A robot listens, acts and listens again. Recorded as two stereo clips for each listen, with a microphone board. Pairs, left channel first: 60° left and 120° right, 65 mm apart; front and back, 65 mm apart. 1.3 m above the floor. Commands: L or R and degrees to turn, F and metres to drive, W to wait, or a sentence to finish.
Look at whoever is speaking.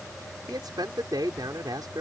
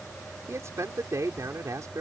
R140
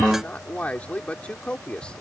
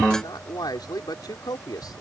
R15
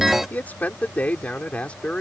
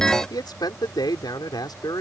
R15
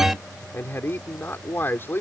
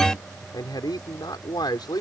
Facing the man speaking.